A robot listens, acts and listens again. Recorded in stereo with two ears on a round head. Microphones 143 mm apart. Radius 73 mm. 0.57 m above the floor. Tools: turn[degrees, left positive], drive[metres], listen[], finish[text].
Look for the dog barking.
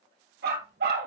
Action: turn[-90]
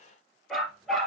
Action: finish[Facing the dog barking.]